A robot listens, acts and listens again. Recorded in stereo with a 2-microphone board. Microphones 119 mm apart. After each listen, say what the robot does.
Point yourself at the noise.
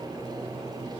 Keep listening.
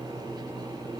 Keep listening.
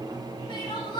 Turn 40° left.
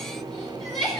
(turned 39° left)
Facing the crying.